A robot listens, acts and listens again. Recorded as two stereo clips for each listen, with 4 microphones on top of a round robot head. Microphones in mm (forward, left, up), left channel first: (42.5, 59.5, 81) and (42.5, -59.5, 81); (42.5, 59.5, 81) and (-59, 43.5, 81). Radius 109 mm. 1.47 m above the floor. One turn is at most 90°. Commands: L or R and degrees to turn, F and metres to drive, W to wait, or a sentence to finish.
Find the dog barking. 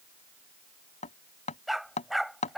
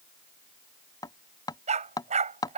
L90
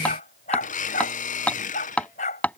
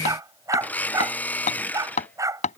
L90
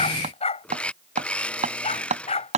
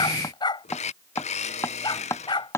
L55
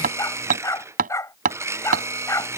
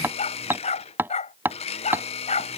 L25
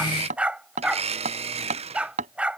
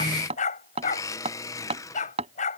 R10
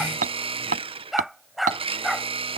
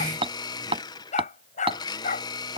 Facing the dog barking.